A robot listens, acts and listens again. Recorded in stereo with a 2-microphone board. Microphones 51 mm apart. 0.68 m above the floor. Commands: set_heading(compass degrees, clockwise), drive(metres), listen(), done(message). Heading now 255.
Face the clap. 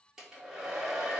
listen()
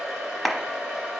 set_heading(225)
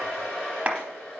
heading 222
set_heading(252)
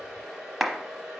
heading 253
done("Found it: a clap, straight ahead, under 1 m away.")